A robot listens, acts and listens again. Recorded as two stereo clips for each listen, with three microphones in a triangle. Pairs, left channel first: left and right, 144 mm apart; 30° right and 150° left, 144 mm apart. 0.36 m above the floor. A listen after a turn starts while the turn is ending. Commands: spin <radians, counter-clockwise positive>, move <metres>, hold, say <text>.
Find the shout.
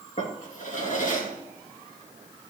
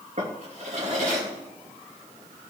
hold
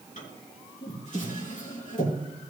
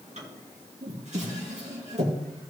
hold
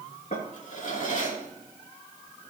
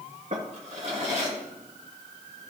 say I can't make out a shout, only a drawer.